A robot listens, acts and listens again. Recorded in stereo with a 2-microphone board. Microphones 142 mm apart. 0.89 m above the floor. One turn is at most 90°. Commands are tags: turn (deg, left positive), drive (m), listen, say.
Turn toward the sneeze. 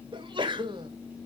<turn deg="-35"/>
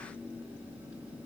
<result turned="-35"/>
<listen/>
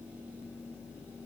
<say>I heard a sneeze, but can't make it out now. It was about straight ahead or 110° right.</say>